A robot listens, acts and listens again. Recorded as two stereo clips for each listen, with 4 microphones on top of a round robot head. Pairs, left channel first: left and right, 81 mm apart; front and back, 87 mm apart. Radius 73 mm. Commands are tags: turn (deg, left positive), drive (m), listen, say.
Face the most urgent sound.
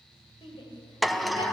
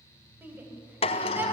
<turn deg="115"/>
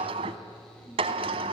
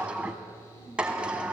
<listen/>
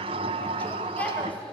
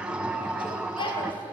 <turn deg="20"/>
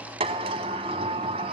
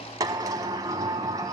<listen/>
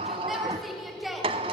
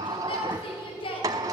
<say>Found it: a shout, straight ahead, 2 to 4 m away.</say>